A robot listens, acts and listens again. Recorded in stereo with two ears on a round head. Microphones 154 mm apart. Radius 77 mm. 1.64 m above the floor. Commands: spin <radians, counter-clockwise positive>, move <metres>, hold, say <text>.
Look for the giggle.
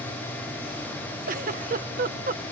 spin -0.96
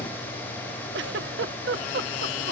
spin -1.22
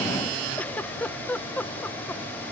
spin 0.17
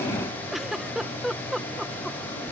say Found it: a giggle, straight ahead.